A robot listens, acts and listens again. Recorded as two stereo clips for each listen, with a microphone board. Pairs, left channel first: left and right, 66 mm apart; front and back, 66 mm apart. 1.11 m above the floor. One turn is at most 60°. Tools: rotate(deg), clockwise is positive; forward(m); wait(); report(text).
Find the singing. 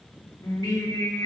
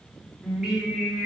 rotate(-60)
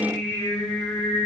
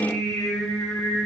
rotate(-45)
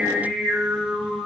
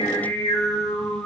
rotate(15)
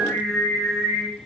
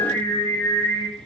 report("Found it: singing, straight ahead.")